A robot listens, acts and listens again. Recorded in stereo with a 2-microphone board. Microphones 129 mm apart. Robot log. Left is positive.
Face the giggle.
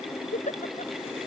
cmd yaw +90
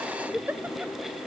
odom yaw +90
note: So it is at 15° right.
cmd yaw -15
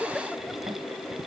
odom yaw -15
end: Found it: a giggle, straight ahead.